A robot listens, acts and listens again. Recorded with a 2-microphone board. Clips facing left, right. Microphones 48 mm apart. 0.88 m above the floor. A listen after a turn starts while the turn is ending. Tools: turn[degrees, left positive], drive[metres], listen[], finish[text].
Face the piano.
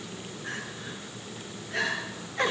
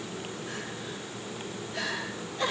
Action: listen[]
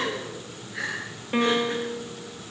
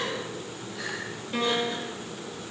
Thought: The piano: about 35° left or 145° left.
Action: turn[35]
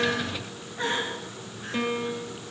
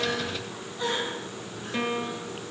Action: finish[Found it: a piano, straight ahead.]